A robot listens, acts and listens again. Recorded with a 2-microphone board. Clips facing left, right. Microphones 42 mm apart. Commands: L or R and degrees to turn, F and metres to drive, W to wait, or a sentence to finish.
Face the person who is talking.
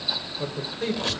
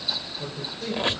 L50
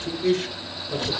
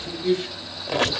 L70
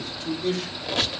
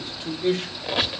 R30
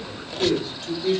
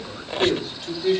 R15
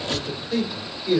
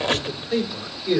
R10
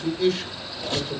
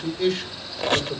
Found it: a man speaking, straight ahead.